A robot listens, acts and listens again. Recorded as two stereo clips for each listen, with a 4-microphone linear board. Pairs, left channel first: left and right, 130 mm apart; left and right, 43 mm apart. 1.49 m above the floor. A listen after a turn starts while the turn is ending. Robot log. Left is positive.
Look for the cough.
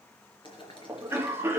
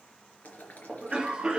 note: The cough: about 15° right or 165° right.
cmd yaw -15
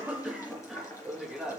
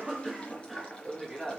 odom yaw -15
end: Found it: a cough, straight ahead.